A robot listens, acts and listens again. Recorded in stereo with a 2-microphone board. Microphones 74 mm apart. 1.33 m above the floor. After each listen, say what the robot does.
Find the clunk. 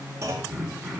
Turn 45° right.
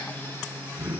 Keep listening.
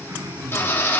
I heard a clunk, but can't make it out now. It was about straight ahead or 90° right.